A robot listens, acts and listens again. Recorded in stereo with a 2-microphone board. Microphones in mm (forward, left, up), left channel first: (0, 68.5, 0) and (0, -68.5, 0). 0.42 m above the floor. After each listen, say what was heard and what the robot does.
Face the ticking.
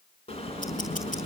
The ticking: about 70° left or 110° left. Turn 70° left.
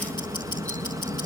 So it is at 35° left. Turn 35° left.
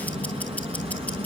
The ticking is now 10° left. Turn 10° left.
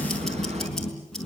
Facing the ticking.